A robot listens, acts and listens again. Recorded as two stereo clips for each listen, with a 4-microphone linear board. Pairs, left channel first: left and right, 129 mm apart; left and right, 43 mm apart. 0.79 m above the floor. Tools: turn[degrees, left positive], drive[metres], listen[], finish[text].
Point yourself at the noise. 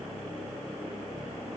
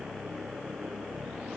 Action: listen[]
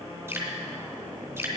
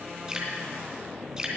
Thought: The dripping: about 20° right or 160° right.
Action: turn[-20]
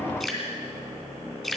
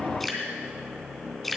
Action: finish[Found it: dripping, straight ahead.]